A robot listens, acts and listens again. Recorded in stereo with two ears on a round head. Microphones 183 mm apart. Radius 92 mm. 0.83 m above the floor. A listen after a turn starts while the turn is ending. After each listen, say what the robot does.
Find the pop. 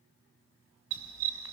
Keep listening.
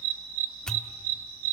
Turn 30° left.
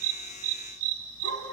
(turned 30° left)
Keep listening.
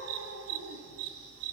I heard a pop, but can't make it out now. It was about 25° right or 145° left.